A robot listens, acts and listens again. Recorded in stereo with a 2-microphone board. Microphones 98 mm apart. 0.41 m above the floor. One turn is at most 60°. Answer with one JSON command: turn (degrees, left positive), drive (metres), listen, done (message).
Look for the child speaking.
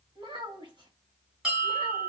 {"turn": -55}
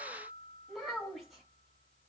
{"done": "Facing the child speaking."}